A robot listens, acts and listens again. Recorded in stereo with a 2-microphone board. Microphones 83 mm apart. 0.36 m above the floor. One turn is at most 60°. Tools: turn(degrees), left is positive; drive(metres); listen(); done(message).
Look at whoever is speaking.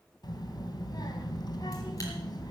turn(degrees=55)
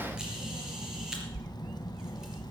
turn(degrees=60)
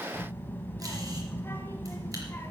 turn(degrees=25)
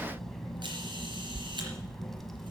done("Found it: a child speaking, straight ahead, 2 to 4 m away.")